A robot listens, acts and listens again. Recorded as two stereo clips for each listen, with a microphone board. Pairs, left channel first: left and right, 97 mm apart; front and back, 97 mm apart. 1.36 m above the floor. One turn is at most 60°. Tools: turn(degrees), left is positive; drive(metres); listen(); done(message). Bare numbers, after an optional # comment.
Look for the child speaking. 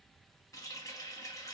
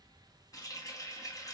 listen()
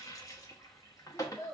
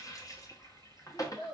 # The child speaking: 25° left.
turn(25)
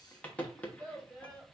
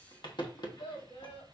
# The child speaking is now 10° left.
turn(10)
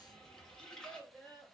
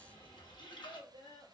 # The child speaking is now 10° left.
turn(10)
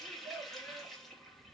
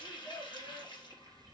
done("Facing the child speaking.")